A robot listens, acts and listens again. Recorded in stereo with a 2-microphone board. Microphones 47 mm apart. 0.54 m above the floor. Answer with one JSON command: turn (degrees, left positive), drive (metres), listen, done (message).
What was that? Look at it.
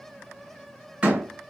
{"turn": -25}
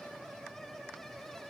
{"listen": true}
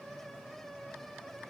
{"done": "I heard a door slam, but can't make it out now. It was about straight ahead or 130° right."}